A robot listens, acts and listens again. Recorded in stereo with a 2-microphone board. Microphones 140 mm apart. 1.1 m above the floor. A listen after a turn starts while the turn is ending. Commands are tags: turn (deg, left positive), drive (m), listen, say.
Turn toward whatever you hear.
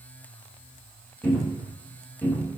<turn deg="15"/>
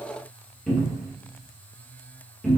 <say>Facing the cupboard door, 1 to 2 m away.</say>